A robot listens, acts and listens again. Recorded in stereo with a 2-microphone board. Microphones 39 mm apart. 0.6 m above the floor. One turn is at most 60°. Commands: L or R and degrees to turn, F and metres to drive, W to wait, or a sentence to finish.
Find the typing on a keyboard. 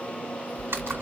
R60
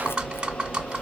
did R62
R25
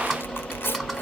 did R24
Facing the typing on a keyboard.